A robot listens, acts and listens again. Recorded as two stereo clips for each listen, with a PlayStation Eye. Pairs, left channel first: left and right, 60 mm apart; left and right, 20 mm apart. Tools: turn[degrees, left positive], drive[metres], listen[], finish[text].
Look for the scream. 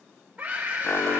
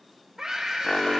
Thought: The scream: about 25° right or 155° right.
Action: turn[-25]
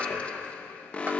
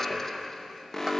Action: listen[]
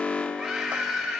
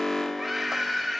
Action: finish[Found it: a scream, straight ahead, over 4 m away.]